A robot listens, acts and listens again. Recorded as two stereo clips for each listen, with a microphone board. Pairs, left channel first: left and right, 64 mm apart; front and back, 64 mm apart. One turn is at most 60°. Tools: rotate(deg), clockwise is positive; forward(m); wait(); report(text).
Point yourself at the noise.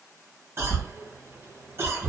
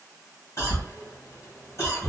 rotate(40)
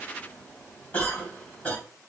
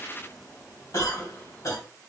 rotate(-25)
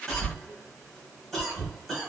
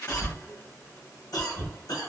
report("Facing the cough, 1 to 2 m away.")